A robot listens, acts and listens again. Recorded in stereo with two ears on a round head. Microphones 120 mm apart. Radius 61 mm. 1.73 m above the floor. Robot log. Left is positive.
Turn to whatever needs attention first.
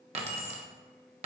cmd idle
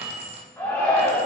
note: The shout: about 15° left or 165° left.
cmd yaw +15
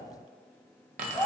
end: Facing the shout, 1 to 2 m away.